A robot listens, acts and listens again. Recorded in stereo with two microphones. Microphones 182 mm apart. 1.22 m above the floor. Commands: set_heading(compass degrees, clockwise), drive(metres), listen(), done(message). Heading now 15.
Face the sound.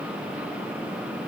listen()
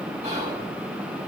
set_heading(50)
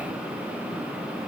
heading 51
listen()
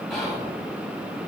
done("Facing the whispering.")